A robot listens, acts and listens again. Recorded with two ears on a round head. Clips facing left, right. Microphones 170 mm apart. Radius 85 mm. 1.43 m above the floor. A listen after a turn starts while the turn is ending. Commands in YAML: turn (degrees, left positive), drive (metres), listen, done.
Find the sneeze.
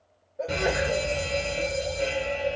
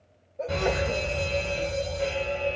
turn: 30
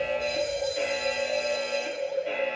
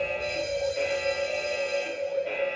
listen: true
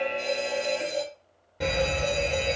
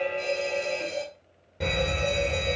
done: "I heard a sneeze, but can't make it out now. It was about 25° right or 145° left."